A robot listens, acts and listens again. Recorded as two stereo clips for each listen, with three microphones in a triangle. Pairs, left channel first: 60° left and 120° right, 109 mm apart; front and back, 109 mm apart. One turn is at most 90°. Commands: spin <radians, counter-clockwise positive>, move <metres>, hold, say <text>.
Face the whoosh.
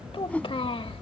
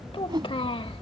spin 1.57
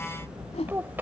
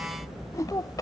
spin 1.05
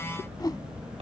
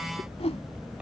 say Facing the whoosh.